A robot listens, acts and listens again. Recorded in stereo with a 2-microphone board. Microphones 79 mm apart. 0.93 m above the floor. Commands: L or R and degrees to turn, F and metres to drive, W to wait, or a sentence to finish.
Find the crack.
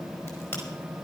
L35
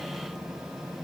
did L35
W
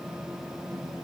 I heard a crack, but can't make it out now. It was about straight ahead or 110° left.